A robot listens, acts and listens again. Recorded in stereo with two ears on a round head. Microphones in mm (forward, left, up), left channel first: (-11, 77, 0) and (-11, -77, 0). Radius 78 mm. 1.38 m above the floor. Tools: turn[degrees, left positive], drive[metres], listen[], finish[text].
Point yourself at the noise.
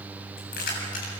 Thought: The keys jangling: about 55° left or 125° left.
Action: turn[55]
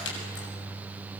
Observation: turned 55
Thought: So it is at 75° left.
Action: turn[75]
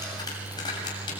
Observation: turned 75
Thought: The keys jangling is now 25° left.
Action: turn[25]
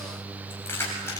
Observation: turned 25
Thought: The keys jangling is now 15° left.
Action: turn[15]
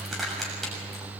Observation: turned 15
Action: finish[Facing the keys jangling.]